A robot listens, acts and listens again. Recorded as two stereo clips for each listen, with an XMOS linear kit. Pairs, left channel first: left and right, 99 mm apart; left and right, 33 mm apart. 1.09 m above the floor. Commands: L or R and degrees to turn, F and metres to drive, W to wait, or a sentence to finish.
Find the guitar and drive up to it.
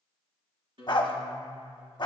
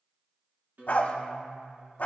R60
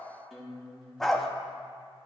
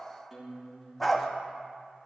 F1.0
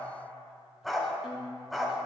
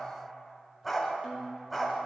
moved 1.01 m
F1.0
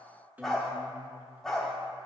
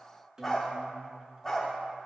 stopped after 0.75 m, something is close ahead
R20
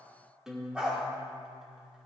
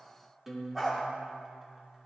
Arrived at the guitar, straight ahead.